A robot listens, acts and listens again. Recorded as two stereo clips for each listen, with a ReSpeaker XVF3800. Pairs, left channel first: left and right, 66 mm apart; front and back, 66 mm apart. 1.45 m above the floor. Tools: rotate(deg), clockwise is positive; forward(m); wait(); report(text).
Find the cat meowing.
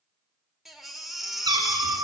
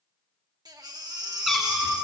rotate(90)
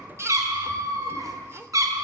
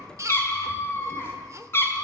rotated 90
rotate(55)
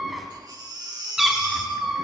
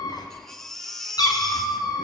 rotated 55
report("Found it: a cat meowing, straight ahead.")